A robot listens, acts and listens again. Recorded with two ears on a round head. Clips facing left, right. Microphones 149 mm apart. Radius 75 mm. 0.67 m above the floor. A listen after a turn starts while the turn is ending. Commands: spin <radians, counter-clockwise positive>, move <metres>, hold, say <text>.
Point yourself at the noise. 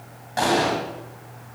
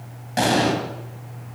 spin -0.44
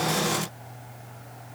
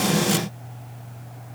hold
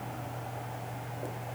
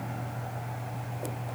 say I heard an explosion, but can't make it out now. It was about straight ahead or 130° right.